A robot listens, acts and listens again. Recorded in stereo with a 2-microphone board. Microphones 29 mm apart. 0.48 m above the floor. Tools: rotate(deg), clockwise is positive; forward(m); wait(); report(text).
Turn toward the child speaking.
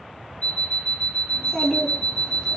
rotate(-25)
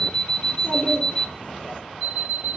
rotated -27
rotate(-130)
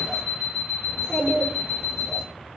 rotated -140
rotate(10)
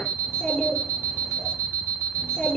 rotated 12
report("Facing the child speaking, over 4 m away.")